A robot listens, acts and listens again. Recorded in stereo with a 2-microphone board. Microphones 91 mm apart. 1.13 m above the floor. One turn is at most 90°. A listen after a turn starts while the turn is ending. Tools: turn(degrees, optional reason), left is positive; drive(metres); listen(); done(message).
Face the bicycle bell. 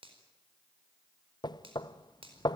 listen()
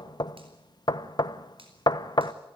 listen()
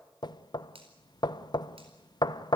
done("I can't make out a bicycle bell, only knocking and a finger snap.")